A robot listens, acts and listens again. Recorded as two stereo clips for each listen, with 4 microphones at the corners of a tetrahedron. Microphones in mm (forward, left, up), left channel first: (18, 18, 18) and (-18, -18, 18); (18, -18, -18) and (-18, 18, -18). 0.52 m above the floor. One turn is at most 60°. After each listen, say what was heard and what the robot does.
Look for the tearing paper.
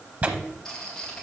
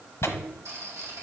The tearing paper: 75° right. Turn 60° right.
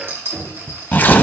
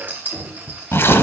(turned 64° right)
The tearing paper is now 10° right. Turn 10° right.
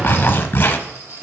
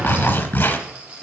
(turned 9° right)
Found it: tearing paper, straight ahead.